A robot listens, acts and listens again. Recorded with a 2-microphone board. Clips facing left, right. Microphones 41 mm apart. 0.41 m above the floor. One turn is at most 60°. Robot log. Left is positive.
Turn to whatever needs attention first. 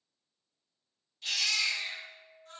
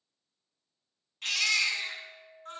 note: The baby crying: about 70° right or 110° right.
cmd yaw -60
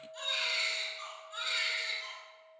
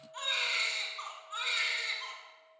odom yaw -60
note: So it is at 50° right.
cmd yaw -50
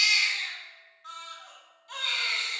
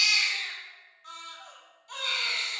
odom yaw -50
end: Found it: a baby crying, straight ahead.